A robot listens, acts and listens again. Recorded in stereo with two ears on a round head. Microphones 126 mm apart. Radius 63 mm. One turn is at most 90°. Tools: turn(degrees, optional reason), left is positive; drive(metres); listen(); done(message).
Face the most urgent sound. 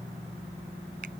listen()
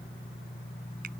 listen()
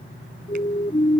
turn(degrees=30, reason="The siren: about 30° left or 150° left.")
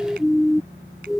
done("Found it: a siren, straight ahead.")